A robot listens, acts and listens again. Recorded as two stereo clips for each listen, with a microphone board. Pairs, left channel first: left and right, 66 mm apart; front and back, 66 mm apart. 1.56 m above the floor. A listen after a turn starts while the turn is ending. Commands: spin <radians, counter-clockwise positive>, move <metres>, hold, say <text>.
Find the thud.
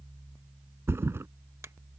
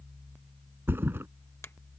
spin -2.36
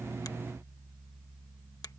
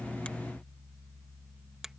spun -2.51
spin 0.17
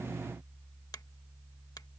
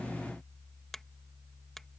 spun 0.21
say Facing where the thud came from. I can't hear it now.